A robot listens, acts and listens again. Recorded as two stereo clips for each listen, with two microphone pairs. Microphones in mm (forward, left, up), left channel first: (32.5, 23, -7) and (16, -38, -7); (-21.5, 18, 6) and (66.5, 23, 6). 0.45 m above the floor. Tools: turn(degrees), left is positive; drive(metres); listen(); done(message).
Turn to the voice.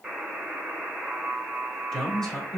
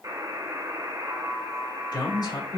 turn(degrees=155)
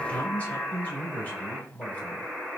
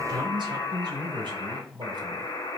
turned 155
turn(degrees=10)
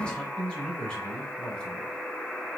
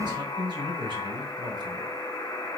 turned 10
done("Found it: a man speaking, straight ahead.")